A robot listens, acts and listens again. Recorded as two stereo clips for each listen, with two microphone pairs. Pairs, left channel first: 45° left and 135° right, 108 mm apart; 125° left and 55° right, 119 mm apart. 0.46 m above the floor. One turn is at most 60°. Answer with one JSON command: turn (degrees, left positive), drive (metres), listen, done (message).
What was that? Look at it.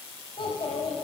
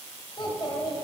{"turn": 60}
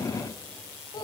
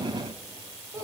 {"done": "Found it: a child speaking, straight ahead."}